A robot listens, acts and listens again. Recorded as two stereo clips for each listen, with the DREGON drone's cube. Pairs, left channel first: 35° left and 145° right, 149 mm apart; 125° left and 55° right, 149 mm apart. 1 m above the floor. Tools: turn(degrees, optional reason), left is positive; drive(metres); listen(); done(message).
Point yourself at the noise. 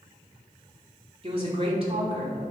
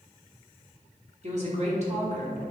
turn(degrees=-95, reason="The woman speaking: 95° right.")
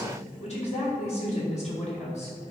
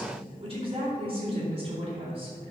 done("Facing the woman speaking.")